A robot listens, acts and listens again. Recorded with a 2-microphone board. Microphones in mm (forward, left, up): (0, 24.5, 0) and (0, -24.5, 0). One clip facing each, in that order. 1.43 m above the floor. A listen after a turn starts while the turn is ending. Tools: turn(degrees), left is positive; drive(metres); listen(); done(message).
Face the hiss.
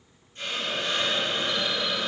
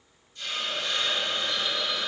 turn(degrees=45)
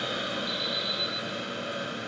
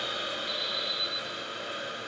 turn(degrees=90)
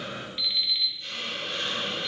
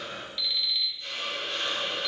done("Found it: a hiss, straight ahead.")